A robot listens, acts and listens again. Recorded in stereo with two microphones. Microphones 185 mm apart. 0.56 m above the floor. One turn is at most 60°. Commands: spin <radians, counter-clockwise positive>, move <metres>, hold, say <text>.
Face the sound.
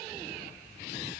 hold
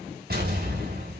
spin -0.96
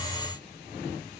hold
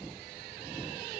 say I heard an explosion, but can't make it out now. It was about straight ahead or 70° right.